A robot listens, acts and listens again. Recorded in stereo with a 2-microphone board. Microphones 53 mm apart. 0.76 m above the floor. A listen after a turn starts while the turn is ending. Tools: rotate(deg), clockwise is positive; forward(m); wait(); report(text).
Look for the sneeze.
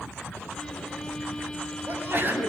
rotate(45)
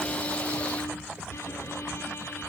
wait()
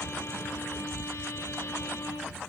report("I heard a sneeze, but can't make it out now. It was about straight ahead or 90° right.")